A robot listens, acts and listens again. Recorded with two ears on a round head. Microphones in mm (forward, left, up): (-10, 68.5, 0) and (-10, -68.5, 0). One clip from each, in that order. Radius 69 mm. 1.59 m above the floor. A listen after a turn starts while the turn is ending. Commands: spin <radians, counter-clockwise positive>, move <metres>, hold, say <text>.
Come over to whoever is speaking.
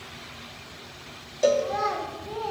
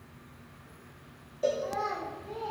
spin 1.05
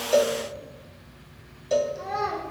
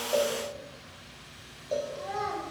move 1.0
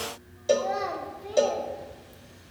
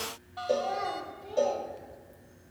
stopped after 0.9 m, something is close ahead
spin 0.26
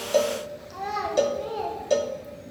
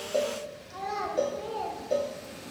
say Arrived at the child speaking, straight ahead.